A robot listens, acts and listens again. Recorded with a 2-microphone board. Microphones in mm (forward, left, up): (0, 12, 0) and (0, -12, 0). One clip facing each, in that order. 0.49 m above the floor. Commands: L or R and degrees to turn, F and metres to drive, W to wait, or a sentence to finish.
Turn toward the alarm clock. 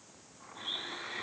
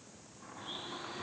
W
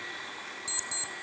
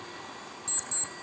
L35
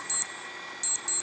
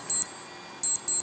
Found it: an alarm clock, straight ahead.